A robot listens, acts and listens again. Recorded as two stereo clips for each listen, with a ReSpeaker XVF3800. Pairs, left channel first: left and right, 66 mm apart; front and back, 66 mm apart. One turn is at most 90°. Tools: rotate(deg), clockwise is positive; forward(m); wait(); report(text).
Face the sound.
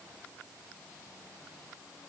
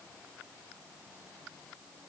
wait()
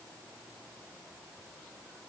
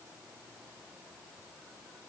wait()
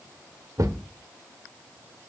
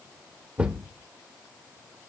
rotate(90)
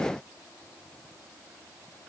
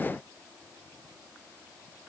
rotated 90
rotate(15)
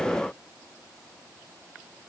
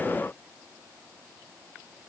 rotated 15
report("Facing where the thud came from. I can't hear it now.")